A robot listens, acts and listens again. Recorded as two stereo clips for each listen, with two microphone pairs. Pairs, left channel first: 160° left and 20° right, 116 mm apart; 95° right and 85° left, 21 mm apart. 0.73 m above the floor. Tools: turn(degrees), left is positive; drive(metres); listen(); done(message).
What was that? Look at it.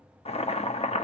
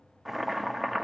turn(degrees=165)
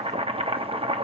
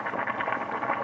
done("Facing the boiling, under 1 m away.")